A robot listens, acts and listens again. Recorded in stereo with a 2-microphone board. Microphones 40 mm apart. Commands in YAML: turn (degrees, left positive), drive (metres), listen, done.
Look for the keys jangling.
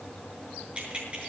turn: -25
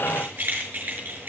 turn: -130
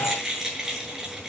turn: -15
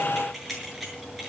done: "Found it: keys jangling, straight ahead."